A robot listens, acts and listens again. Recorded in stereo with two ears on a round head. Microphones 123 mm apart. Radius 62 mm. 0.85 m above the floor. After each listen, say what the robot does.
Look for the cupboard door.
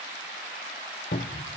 Turn 75° left.
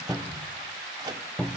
Turn 10° left.
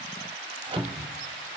Found it: a cupboard door, straight ahead.